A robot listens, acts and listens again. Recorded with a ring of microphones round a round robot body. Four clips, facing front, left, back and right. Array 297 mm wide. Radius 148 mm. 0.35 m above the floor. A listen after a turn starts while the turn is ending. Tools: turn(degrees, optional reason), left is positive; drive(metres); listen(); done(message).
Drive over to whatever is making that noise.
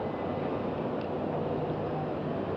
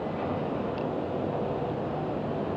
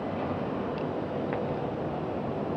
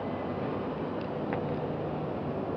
listen()
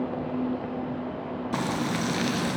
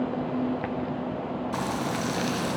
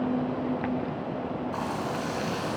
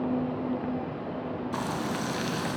drive(metres=1.0)
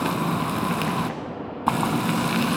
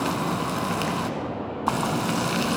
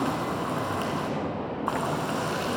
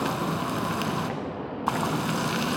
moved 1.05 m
turn(degrees=-10, reason="The frying is now 10° right.")
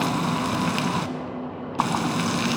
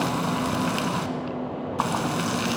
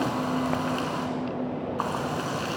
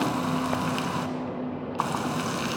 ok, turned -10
drive(metres=1.0)
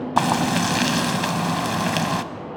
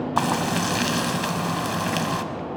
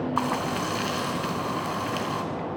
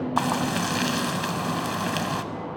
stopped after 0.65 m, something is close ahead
done("I am next to the frying.")